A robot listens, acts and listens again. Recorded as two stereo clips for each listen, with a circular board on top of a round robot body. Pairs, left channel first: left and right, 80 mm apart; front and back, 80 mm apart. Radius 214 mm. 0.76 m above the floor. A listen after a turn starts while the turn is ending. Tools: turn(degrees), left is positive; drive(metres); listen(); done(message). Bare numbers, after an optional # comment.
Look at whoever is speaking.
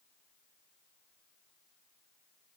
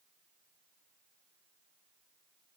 listen()
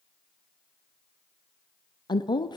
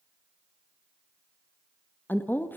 # The woman speaking: 65° left.
turn(65)
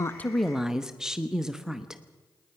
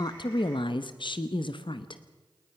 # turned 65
# The woman speaking is now 10° right.
turn(-10)
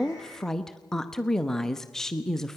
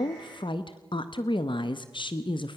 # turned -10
done("Found it: a woman speaking, straight ahead.")